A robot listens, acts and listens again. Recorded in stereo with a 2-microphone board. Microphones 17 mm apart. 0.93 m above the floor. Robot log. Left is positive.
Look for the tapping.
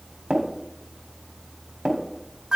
note: The tapping: about 55° right or 125° right.
cmd yaw -55
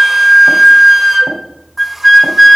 cmd idle
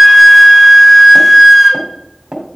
note: So it is at 60° right.
cmd yaw -60
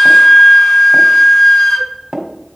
note: The tapping is now 25° right.
cmd yaw -25
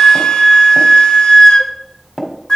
note: The tapping is now 10° left.
cmd yaw +10
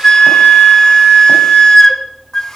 cmd idle
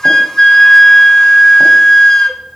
cmd idle
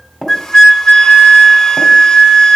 end: Found it: tapping, straight ahead.